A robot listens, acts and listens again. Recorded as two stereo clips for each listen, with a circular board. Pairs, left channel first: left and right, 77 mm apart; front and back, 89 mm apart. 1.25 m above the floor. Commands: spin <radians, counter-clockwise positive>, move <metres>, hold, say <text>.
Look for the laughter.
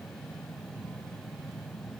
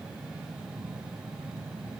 hold
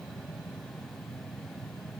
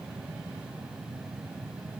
hold
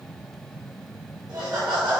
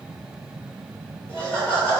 spin -1.31
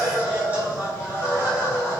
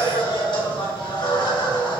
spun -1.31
spin -0.35
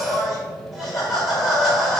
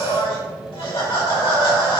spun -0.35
say Found it: laughter, straight ahead.